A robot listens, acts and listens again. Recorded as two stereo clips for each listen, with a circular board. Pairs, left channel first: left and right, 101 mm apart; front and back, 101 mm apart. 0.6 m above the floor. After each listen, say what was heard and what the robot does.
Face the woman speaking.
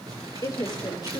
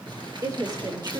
The woman speaking: 130° left. Turn 130° left.
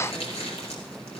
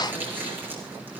Keep listening.
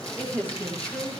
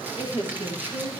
The woman speaking is now 20° left. Turn 20° left.
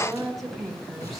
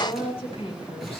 Found it: a woman speaking, straight ahead.